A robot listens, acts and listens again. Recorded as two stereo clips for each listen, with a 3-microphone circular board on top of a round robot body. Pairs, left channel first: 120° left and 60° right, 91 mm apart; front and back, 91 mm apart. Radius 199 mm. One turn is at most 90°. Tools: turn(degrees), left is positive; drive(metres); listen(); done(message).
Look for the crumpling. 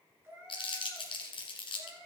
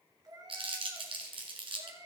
turn(degrees=90)
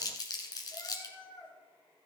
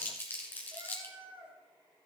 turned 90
turn(degrees=70)
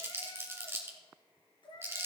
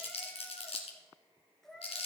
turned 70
done("Found it: crumpling, straight ahead, 1 to 2 m away.")